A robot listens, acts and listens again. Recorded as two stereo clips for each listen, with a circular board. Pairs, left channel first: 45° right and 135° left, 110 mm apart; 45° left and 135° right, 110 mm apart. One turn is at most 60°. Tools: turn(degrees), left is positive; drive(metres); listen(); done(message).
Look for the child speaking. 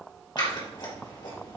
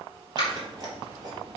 listen()
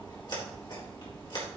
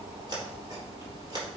listen()
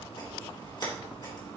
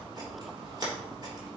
done("I can't make out a child speaking, only scissors.")